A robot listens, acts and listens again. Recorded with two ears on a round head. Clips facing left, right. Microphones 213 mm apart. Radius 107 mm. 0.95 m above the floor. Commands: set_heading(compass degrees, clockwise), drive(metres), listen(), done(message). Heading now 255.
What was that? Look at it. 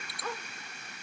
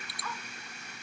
set_heading(220)
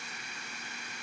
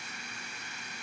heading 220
listen()
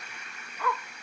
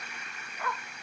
set_heading(110)
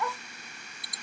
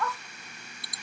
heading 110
set_heading(95)
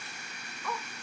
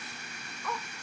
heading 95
done("Facing the dog barking.")